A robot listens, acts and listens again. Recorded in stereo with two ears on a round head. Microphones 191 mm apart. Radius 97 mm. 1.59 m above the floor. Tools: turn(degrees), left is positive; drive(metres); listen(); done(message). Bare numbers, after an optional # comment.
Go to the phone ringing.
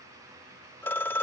turn(30)
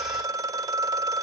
# So it is at 15° right.
turn(-15)
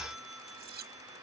listen()
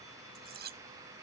listen()
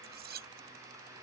done("I heard a phone ringing from this way, but can't make it out now. I did not reach it.")